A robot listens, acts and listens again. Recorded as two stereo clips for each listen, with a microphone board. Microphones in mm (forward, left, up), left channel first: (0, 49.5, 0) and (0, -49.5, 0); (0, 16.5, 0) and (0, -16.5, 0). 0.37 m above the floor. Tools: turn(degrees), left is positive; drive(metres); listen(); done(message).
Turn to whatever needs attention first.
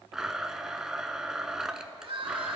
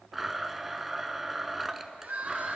turn(degrees=-70)
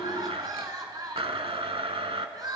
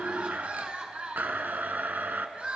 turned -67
turn(degrees=-45)
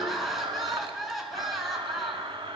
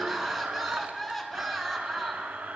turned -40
done("Facing the crying, 1 to 2 m away.")